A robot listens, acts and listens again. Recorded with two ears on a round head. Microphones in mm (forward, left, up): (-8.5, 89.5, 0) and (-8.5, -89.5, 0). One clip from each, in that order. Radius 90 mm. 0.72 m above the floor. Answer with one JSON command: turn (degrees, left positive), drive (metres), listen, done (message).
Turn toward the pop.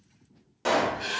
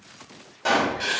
{"turn": 30}
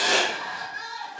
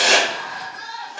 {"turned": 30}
{"listen": true}
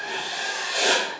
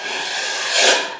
{"done": "I heard a pop, but can't make it out now. It was about 20° right or 140° left."}